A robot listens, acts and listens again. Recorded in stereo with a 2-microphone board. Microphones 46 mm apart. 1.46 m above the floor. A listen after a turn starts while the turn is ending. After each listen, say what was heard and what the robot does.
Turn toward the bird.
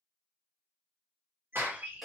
The bird: about 70° right or 110° right. Turn 70° right.
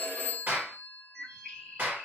Found it: a bird, straight ahead, 1 to 2 m away.